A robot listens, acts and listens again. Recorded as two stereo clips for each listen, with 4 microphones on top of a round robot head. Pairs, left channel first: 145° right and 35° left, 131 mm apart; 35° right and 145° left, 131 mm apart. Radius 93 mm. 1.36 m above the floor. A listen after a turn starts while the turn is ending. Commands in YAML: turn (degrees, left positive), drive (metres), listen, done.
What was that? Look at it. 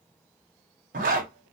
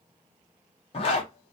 turn: 15
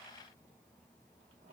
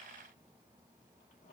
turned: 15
listen: true
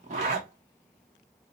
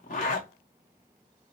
done: "Facing the zipper."